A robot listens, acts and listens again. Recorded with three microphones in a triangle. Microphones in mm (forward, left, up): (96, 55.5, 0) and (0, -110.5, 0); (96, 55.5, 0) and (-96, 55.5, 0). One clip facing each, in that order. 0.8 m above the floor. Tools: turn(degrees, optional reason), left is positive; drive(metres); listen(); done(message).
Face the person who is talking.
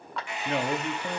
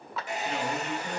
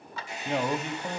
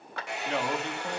turn(degrees=75, reason="The man speaking: 75° left.")
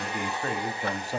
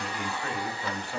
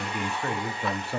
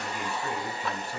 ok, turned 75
turn(degrees=10, reason="The man speaking is now 10° left.")
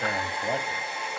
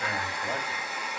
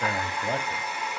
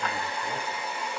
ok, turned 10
done("Facing the man speaking, 1 to 2 m away.")